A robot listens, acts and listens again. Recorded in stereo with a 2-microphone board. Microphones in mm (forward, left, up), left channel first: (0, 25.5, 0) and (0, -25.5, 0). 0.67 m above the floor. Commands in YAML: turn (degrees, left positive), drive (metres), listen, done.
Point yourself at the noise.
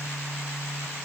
listen: true
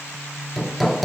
turn: 30
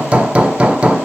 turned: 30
turn: -25
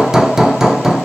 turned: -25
turn: -10
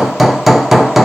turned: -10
done: "Facing the hammering, 1 to 2 m away."